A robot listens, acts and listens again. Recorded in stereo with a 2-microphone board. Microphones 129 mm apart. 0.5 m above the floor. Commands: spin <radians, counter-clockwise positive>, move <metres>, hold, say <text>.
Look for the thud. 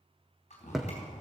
spin -0.52
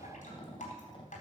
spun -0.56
hold
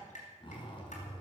say I heard a thud, but can't make it out now. It was about 30° left or 145° right.